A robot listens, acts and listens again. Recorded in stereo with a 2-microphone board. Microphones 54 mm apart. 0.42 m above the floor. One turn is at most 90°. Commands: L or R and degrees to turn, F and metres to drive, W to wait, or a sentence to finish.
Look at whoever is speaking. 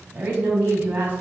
R35
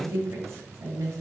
R90
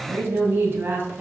R50
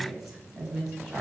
Facing the woman speaking, 2 to 4 m away.